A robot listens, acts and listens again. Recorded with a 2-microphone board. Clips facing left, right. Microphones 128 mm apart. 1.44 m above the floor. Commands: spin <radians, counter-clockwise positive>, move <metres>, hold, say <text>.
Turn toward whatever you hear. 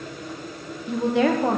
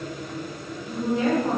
spin 1.31
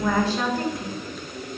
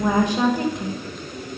spin -0.35
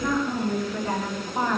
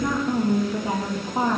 spin -0.35
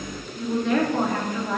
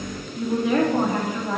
spin -0.17
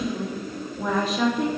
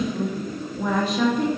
say Facing the woman speaking.